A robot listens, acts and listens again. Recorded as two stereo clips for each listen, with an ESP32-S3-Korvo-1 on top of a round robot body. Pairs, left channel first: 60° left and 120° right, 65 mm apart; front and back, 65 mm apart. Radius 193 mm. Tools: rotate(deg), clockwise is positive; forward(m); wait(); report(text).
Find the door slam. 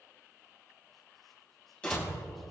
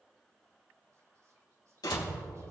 rotate(15)
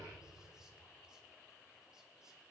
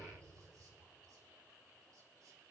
report("I heard a door slam from this way, but can't make it out now.")